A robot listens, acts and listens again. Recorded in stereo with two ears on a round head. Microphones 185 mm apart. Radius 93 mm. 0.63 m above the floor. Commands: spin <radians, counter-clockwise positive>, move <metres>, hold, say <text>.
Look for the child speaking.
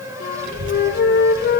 spin -0.79
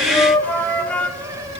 spin -0.44
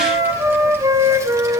spin -0.26
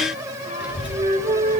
spin -0.17
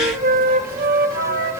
say Facing the child speaking, 2 to 4 m away.